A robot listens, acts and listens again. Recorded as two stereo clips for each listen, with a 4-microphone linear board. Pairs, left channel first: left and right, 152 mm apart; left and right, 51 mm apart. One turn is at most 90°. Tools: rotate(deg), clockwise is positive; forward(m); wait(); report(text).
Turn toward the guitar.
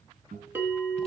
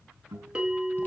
rotate(60)
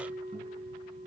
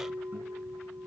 wait()
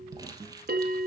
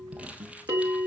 rotate(50)
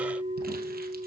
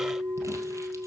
wait()
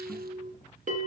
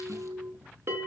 wait()
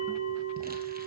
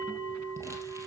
report("I heard a guitar from this way, but can't make it out now.")